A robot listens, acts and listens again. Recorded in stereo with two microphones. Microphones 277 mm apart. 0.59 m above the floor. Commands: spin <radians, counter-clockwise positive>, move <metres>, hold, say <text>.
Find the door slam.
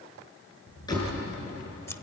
spin 0.52
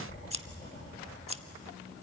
hold
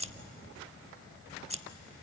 say I heard a door slam, but can't make it out now. It was about 15° right or 135° left.